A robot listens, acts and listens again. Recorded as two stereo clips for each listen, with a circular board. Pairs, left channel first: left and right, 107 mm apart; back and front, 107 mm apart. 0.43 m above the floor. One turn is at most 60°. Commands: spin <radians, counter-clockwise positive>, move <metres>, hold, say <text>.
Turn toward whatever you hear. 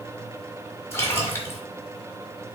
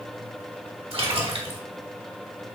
spin 0.44
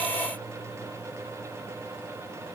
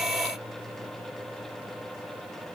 say Facing where the splash came from. I can't hear it now.